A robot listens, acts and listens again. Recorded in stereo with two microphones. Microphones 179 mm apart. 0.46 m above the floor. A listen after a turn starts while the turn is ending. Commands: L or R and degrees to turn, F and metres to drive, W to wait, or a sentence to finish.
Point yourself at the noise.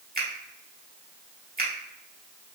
R55
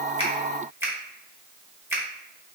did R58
R15
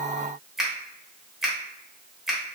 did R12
Found it: a finger snap, straight ahead, 1 to 2 m away.